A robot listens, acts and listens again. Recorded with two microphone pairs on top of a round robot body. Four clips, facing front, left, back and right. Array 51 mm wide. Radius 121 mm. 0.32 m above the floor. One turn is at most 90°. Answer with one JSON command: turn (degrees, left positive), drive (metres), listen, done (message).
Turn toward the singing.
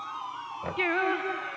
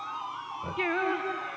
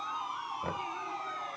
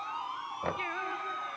{"turn": 20}
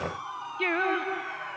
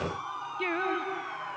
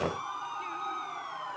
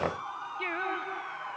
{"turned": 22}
{"done": "Facing the singing."}